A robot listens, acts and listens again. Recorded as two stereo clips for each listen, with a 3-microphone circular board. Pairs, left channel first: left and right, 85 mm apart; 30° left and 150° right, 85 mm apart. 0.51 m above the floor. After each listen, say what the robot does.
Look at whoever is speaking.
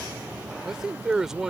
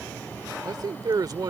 Turn 175° right.
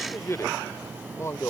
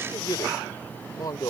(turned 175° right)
Turn 45° left.
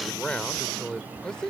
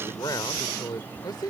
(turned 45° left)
Turn 10° left.
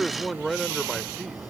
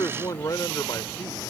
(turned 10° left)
Facing the man speaking.